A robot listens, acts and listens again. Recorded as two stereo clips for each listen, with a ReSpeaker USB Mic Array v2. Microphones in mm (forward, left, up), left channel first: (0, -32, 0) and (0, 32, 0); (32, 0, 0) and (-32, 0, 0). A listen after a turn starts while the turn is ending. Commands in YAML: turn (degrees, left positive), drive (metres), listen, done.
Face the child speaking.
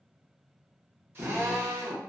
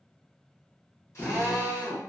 listen: true
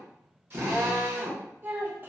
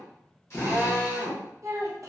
turn: 145
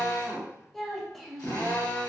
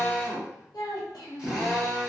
done: "Found it: a child speaking, straight ahead."